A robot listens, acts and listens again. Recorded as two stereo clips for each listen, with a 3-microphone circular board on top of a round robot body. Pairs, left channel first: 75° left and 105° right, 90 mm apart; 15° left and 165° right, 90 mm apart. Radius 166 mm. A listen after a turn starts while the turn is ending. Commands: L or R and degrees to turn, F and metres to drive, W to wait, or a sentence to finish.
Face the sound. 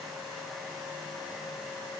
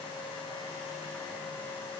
W
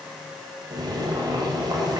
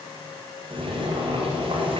R150
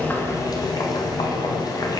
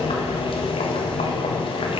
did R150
L30
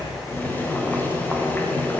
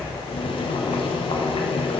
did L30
Found it: boiling, straight ahead, 1 to 2 m away.